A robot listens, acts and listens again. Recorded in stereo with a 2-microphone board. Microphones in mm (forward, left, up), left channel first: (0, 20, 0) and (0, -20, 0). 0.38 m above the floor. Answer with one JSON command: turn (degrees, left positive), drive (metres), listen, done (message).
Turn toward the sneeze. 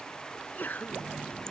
{"turn": 50}
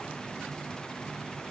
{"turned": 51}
{"listen": true}
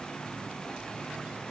{"done": "I heard a sneeze, but can't make it out now. It was about straight ahead or 75° left."}